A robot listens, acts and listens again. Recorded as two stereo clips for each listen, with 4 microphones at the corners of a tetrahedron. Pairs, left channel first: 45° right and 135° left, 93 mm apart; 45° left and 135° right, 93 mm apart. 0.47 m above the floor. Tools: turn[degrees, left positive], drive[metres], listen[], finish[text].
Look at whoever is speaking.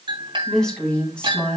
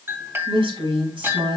Thought: The woman speaking: 120° right.
Action: turn[-120]
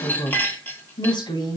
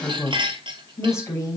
Thought: The woman speaking is now 10° right.
Action: turn[-10]
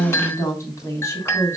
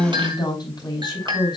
Thought: The woman speaking is now 15° left.
Action: turn[15]
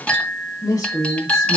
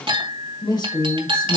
Action: finish[Facing the woman speaking, 2 to 4 m away.]